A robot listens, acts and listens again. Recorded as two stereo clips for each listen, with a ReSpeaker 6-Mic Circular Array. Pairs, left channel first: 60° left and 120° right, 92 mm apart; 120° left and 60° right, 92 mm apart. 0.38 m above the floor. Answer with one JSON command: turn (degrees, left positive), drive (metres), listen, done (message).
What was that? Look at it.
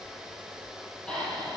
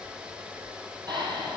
{"turn": -20}
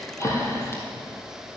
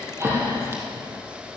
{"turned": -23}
{"done": "Facing the breathing, 2 to 4 m away."}